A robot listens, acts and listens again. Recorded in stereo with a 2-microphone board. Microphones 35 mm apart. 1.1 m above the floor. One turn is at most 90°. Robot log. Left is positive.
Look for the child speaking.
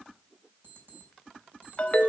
cmd idle
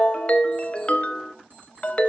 cmd idle
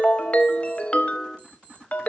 end: I can't make out a child speaking to turn to.